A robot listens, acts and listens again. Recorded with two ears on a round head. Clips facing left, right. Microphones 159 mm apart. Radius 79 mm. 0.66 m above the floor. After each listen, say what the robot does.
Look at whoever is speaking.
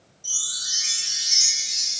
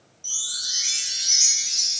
Keep listening.
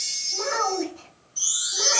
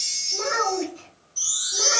Turn 35° right.
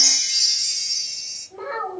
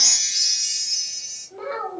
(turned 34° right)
Found it: a child speaking, straight ahead, 1 to 2 m away.